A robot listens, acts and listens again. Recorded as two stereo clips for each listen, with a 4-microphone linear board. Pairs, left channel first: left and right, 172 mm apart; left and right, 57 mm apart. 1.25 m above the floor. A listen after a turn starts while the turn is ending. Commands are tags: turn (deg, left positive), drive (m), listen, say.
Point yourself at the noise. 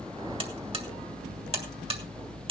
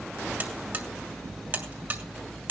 <turn deg="-35"/>
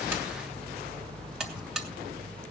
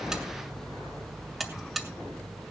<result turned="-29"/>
<say>Found it: a buzzer, straight ahead.</say>